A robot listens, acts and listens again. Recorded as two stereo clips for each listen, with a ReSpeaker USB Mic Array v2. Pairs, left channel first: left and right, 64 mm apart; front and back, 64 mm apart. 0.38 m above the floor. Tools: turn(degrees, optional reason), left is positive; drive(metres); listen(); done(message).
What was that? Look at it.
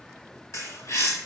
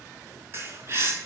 turn(degrees=130, reason="The bird: 130° left.")
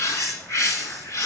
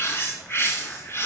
turn(degrees=50, reason="The bird is now 50° left.")
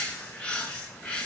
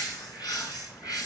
turn(degrees=15, reason="The bird is now 15° left.")
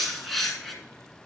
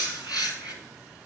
done("Facing the bird, 2 to 4 m away.")